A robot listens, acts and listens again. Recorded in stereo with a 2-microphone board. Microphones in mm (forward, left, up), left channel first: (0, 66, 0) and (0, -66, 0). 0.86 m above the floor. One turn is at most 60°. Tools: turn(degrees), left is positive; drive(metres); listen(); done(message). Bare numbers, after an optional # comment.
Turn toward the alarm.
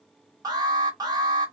# The alarm: about 30° right or 150° right.
turn(-30)
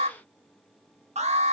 # So it is at 120° right.
turn(-60)
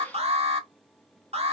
# The alarm is now 55° right.
turn(-55)
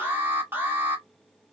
# The alarm is now 15° right.
turn(-15)
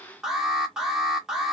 done("Facing the alarm, under 1 m away.")